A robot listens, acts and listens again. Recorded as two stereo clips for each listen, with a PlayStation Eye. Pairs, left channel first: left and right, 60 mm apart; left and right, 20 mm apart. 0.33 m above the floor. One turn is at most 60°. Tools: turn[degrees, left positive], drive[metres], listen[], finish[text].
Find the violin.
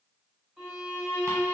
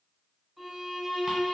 Action: turn[-30]
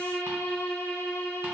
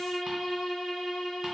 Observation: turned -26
Thought: So it is at 20° left.
Action: turn[20]
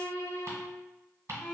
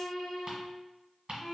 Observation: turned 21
Action: finish[Found it: a violin, straight ahead.]